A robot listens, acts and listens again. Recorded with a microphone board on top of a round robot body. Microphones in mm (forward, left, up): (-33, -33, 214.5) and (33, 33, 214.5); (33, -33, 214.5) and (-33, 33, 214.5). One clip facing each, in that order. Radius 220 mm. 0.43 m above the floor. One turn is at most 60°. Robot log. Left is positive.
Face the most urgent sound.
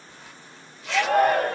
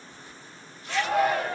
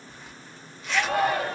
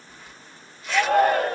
note: The shout: straight behind.
cmd yaw +60
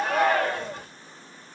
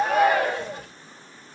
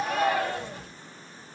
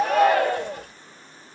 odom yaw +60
note: The shout is now 125° left.
cmd yaw +60
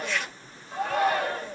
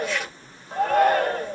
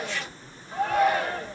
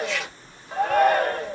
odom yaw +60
note: The shout is now 90° left.
cmd yaw +60
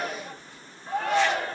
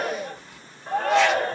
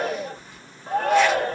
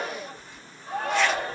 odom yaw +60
end: Facing the shout.